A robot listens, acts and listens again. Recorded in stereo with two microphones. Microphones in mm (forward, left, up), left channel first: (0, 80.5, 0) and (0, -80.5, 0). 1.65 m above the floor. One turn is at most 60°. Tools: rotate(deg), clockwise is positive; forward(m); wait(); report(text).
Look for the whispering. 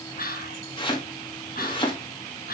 rotate(-60)
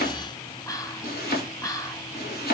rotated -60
rotate(-20)
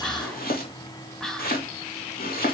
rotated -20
report("Found it: whispering, straight ahead, 1 to 2 m away.")